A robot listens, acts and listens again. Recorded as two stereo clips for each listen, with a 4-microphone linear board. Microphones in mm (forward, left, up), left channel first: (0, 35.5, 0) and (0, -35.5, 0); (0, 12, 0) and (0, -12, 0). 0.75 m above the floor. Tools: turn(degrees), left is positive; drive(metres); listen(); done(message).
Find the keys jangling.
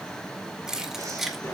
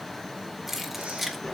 turn(degrees=-30)
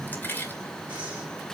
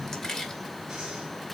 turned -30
turn(degrees=30)
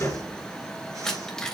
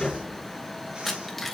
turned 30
turn(degrees=10)
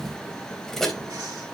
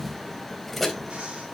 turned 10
done("Facing the keys jangling.")